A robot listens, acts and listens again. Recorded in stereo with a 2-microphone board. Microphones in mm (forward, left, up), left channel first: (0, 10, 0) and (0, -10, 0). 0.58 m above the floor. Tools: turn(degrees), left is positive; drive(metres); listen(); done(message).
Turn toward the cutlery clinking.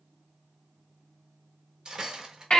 turn(degrees=-35)
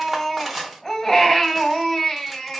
done("Facing the cutlery clinking.")